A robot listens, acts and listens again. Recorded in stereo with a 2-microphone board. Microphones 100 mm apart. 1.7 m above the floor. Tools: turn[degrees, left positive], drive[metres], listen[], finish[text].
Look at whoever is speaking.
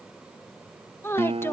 Thought: The woman speaking: about 25° left or 155° left.
Action: turn[25]
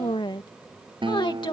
Thought: So it is at 130° left.
Action: turn[130]
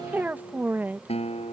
Thought: The woman speaking is now 20° right.
Action: turn[-20]
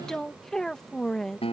Action: finish[Facing the woman speaking.]